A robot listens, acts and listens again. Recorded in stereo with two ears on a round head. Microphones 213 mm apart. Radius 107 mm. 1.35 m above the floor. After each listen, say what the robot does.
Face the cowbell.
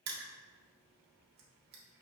Keep listening.
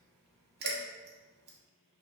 Turn 90° left.
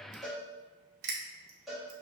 Found it: a cowbell, straight ahead.